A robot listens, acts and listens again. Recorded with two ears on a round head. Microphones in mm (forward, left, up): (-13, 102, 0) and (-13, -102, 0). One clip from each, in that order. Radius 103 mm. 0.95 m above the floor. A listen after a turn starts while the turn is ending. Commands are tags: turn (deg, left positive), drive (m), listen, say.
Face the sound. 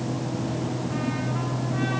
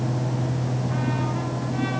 <listen/>
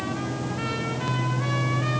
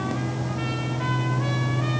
<listen/>
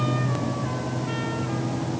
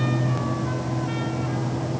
<say>I can't make out anything.</say>